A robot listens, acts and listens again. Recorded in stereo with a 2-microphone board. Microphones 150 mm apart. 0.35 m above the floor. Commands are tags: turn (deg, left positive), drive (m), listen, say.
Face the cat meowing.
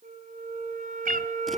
<turn deg="-70"/>
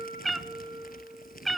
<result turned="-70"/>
<say>Found it: a cat meowing, straight ahead, 1 to 2 m away.</say>